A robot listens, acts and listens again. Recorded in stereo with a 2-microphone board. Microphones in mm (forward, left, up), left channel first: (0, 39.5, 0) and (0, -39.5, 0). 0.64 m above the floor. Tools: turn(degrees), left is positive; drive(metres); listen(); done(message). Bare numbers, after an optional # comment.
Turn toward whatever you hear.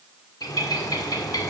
# The bird: about 60° left or 120° left.
turn(60)
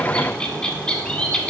# So it is at 15° left.
turn(15)
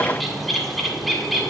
done("Found it: a bird, straight ahead, 1 to 2 m away.")